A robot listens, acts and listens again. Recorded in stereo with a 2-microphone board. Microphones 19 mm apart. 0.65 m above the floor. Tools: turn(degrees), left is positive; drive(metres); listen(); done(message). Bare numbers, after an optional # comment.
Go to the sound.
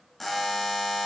turn(30)
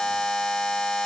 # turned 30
# So it is at 140° left.
turn(140)
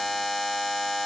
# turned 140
# The buzzer is now 10° left.
turn(10)
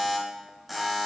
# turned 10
drive(1.0)
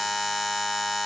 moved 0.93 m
drive(1.0)
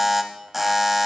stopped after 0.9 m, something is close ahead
done("Arrived at the buzzer, straight ahead.")